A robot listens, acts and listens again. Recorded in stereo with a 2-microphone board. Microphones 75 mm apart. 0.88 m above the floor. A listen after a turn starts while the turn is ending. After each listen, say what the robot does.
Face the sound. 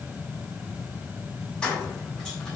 Turn 30° left.
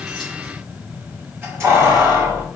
Turn 35° right.
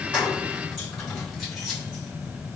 Keep listening.
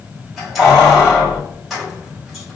Found it: keys jangling, straight ahead.